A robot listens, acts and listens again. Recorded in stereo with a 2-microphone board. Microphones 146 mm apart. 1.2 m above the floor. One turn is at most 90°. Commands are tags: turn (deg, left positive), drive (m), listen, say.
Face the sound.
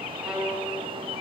<turn deg="-30"/>
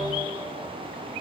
<listen/>
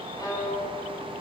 <turn deg="25"/>
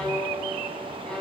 <say>Found it: a violin, straight ahead.</say>